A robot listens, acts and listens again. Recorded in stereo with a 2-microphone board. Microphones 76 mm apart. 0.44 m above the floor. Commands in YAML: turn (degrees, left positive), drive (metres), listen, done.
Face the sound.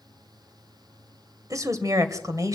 turn: -45
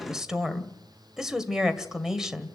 done: "Facing the woman speaking."